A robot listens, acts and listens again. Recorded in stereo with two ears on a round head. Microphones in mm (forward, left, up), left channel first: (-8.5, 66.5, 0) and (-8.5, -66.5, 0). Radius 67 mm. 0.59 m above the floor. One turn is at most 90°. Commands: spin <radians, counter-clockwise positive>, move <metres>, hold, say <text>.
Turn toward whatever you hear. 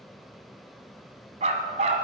spin -0.79
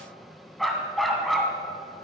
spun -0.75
say Found it: a dog barking, straight ahead, 1 to 2 m away.